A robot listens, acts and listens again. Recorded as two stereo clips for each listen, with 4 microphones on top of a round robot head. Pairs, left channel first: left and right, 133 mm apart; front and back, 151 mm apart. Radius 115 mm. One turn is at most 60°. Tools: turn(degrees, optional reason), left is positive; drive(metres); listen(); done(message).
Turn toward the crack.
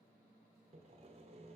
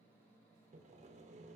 listen()
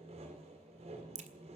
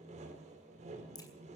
turn(degrees=-60, reason="The crack: 65° right.")
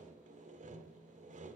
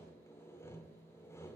done("Facing where the crack came from. I can't hear it now.")